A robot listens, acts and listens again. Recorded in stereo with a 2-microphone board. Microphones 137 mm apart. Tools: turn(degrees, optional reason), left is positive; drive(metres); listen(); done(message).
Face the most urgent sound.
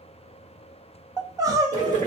turn(degrees=-25, reason="The crying: about 25° right or 155° right.")
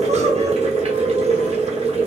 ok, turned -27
listen()
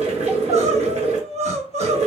turn(degrees=-125, reason="So it is at 125° right.")
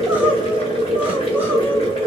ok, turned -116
turn(degrees=-10, reason="Nothing new. It was at 10° right.")
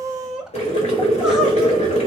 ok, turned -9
done("Facing the crying.")